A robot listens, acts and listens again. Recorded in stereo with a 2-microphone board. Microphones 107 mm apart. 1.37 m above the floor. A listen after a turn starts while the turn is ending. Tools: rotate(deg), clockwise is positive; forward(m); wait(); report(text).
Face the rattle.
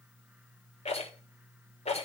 rotate(-90)
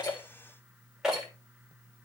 report("Facing the rattle.")